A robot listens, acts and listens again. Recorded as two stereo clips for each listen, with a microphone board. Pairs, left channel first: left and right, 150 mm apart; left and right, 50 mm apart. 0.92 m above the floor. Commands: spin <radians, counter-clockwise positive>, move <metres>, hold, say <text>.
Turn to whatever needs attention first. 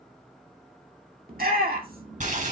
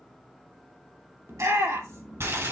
spin -1.57
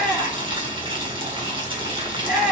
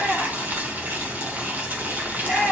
say Found it: a shout, straight ahead.